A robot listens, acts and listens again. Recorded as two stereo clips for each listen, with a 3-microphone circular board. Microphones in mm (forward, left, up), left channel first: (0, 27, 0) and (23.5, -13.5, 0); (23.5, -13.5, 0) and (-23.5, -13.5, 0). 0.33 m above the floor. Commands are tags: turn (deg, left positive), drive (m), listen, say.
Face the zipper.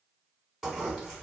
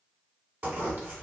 <turn deg="-140"/>
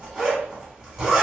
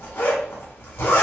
<turn deg="15"/>
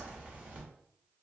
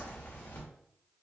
<listen/>
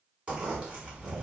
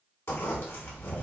<say>Facing the zipper.</say>